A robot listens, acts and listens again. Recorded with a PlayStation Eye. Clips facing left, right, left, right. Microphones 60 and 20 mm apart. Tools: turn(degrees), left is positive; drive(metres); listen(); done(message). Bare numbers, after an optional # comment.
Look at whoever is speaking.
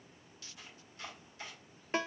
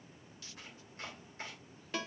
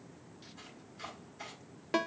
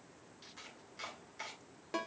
listen()
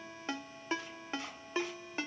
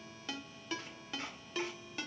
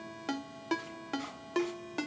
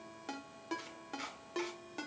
listen()
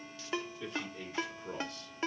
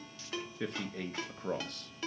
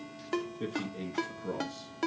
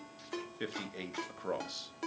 # The man speaking: about 60° right or 120° right.
turn(-60)
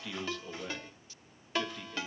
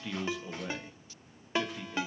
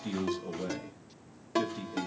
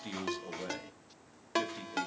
# So it is at 10° right.
turn(-10)
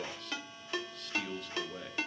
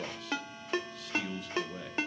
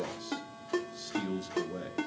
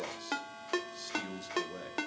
done("Found it: a man speaking, straight ahead.")